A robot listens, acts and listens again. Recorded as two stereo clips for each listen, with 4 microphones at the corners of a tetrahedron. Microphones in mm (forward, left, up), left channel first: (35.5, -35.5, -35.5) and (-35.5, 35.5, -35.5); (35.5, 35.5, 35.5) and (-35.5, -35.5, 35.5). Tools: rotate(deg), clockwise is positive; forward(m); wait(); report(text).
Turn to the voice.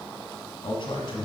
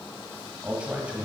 rotate(60)
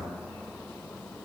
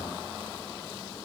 wait()
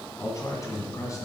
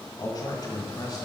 report("Found it: a man speaking, straight ahead.")